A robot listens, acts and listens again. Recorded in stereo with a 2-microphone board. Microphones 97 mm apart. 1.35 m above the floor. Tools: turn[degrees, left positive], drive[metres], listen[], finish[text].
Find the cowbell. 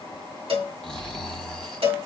Thought: The cowbell: about 70° right or 110° right.
Action: turn[-70]
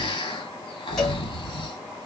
Action: listen[]
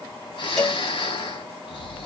Action: finish[Facing the cowbell.]